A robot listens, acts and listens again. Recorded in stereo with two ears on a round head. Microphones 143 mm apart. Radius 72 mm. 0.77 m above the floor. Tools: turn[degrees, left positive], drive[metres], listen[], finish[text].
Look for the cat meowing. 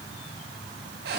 Action: listen[]
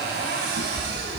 Thought: The cat meowing: about 60° left or 120° left.
Action: turn[60]
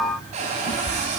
Thought: So it is at 55° left.
Action: turn[55]
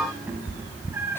Thought: The cat meowing is now 15° right.
Action: turn[-15]
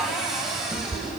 Thought: The cat meowing is now 15° right.
Action: turn[-15]
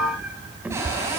Thought: The cat meowing is now 10° right.
Action: turn[-10]
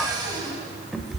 Action: finish[Found it: a cat meowing, straight ahead.]